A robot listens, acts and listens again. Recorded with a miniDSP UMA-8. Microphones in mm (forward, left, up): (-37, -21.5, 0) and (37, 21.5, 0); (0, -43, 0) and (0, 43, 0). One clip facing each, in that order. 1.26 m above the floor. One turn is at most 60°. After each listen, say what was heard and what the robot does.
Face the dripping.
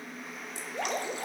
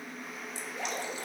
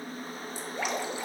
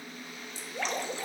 The dripping: 170° right. Turn 60° right.
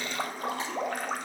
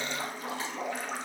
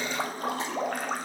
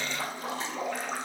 The dripping is now 120° right. Turn 60° right.
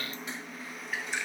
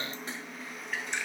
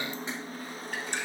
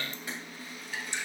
The dripping is now 65° right. Turn 60° right.
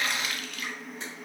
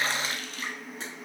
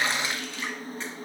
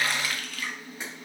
The dripping is now 25° right. Turn 25° right.
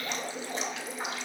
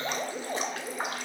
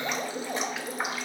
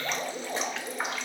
Found it: dripping, straight ahead, under 1 m away.